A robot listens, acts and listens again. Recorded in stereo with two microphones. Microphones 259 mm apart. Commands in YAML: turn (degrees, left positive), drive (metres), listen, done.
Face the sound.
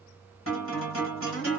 turn: 55
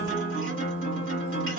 turn: 60
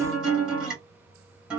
done: "Found it: a guitar, straight ahead."